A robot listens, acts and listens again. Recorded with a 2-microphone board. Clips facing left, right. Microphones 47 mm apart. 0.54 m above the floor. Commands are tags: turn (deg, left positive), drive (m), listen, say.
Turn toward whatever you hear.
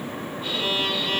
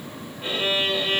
<turn deg="-30"/>
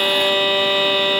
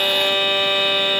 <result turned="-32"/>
<say>Found it: a violin, straight ahead.</say>